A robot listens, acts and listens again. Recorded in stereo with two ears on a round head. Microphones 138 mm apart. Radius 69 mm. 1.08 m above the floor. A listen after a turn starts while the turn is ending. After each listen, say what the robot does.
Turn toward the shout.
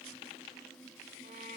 Keep listening.
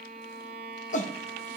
Turn 50° left.
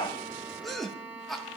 Facing the shout, under 1 m away.